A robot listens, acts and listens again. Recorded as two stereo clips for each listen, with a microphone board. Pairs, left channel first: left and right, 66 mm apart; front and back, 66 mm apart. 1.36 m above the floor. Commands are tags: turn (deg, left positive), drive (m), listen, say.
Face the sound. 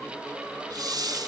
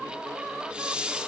<turn deg="-105"/>
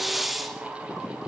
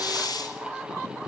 <say>Found it: a hiss, straight ahead, 2 to 4 m away.</say>